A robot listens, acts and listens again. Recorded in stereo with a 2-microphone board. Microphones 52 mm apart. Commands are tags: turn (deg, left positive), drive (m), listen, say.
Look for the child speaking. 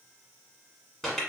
<listen/>
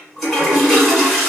<listen/>
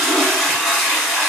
<say>I can't make out a child speaking to turn to.</say>